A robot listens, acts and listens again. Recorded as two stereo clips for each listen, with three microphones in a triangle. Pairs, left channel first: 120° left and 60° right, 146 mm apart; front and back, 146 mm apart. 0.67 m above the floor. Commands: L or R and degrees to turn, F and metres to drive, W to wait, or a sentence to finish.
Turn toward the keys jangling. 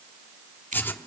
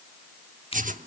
W
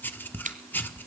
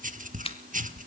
W
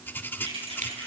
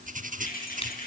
R10
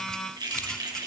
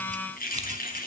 Found it: keys jangling, straight ahead.